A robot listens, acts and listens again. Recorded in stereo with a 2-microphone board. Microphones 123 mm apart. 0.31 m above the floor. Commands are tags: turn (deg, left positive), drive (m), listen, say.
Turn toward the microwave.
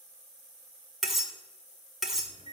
<turn deg="70"/>
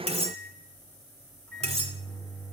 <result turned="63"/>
<turn deg="10"/>
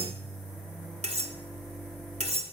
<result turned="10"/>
<say>Found it: a microwave, straight ahead.</say>